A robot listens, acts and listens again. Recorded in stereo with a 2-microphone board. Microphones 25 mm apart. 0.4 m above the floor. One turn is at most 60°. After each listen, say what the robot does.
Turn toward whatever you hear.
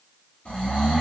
Turn 60° left.
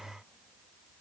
Keep listening.
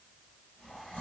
Turn 60° left.
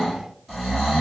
Found it: snoring, straight ahead.